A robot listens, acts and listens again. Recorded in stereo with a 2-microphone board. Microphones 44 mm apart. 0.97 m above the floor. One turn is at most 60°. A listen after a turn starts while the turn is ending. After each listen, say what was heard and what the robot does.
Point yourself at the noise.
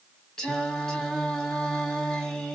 Turn 30° left.
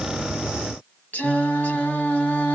So it is at 135° left. Turn 60° left.
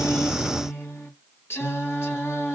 The singing is now 85° left. Turn 60° left.
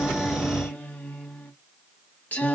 The singing is now 40° left. Turn 40° left.
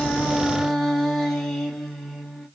Found it: singing, straight ahead.